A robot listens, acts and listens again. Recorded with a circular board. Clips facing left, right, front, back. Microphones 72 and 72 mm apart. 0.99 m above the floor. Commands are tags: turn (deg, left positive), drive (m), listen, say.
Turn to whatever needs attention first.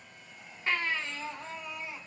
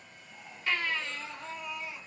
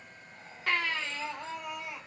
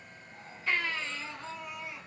<turn deg="30"/>
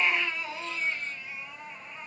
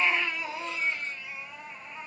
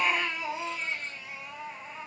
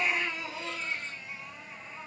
<say>Facing the baby crying, under 1 m away.</say>